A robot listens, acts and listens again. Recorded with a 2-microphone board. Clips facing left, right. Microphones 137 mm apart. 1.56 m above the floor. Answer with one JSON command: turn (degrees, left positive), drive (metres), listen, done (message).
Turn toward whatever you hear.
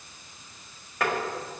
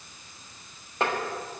{"turn": -25}
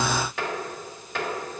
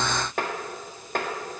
{"turn": -125}
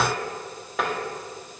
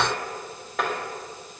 {"done": "Facing the tapping, 1 to 2 m away."}